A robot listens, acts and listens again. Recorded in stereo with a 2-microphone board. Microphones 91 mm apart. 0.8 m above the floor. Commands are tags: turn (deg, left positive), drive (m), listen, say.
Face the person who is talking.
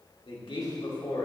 <turn deg="70"/>
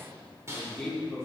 <say>Found it: a man speaking, straight ahead.</say>